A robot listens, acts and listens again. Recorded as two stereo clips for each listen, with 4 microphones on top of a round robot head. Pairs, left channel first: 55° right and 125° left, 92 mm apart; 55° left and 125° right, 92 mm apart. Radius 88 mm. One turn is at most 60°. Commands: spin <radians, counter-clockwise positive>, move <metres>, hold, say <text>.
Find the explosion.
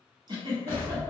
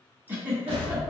spin -1.05
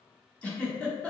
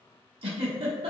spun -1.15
spin -0.96
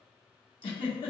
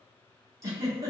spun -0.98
say I heard an explosion from this way, but can't make it out now.